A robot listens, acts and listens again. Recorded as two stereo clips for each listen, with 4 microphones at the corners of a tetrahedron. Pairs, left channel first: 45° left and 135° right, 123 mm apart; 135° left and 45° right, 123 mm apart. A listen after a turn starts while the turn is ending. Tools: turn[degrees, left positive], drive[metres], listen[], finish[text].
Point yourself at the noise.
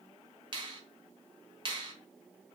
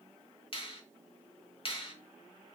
Thought: The finger snap: 175° left.
Action: turn[175]
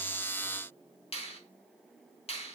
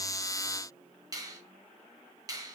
Thought: The finger snap is now 15° left.
Action: turn[15]
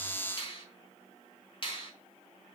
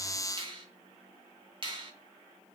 Action: finish[Found it: a finger snap, straight ahead.]